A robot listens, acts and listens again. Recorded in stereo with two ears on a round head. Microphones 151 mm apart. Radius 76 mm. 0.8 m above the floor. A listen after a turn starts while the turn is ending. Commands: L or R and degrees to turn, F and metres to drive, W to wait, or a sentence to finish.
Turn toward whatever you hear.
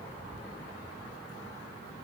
W
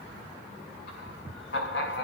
L75
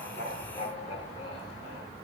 L35
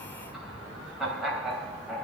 Facing the laughter.